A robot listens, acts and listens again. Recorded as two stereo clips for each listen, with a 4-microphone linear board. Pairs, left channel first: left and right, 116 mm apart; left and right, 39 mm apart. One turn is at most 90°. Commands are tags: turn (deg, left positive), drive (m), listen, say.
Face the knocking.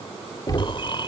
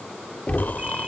<turn deg="35"/>
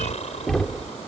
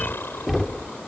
<say>Facing the knocking.</say>